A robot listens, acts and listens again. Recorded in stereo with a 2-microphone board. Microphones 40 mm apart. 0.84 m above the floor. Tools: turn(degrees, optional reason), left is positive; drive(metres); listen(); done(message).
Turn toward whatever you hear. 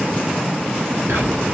turn(degrees=-90)
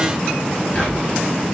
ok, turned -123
turn(degrees=30, reason="So it is at 30° left.")
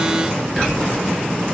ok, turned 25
done("Found it: whispering, straight ahead, over 4 m away.")